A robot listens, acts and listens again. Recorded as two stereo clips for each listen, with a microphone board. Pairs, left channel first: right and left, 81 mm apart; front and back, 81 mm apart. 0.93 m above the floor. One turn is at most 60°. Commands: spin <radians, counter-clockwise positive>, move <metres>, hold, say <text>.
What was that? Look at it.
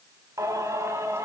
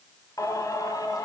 spin 0.61
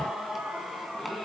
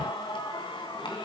say Facing the singing.